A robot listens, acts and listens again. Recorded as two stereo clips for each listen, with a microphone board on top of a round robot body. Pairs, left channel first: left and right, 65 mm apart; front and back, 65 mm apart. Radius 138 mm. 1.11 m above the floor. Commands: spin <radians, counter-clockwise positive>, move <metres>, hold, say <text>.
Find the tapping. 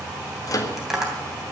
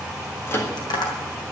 spin -0.17
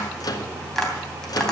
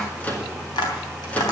say Facing the tapping, 2 to 4 m away.